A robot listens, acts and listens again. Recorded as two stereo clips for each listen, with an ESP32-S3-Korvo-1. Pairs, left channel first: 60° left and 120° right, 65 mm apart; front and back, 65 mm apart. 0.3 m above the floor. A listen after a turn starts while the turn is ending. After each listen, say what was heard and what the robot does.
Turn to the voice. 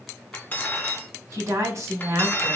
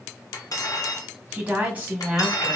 The woman speaking: 120° right. Turn 120° right.
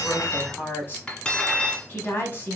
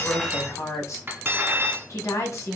The woman speaking is now 10° left. Turn 10° left.
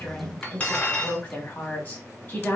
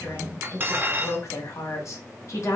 Facing the woman speaking, 1 to 2 m away.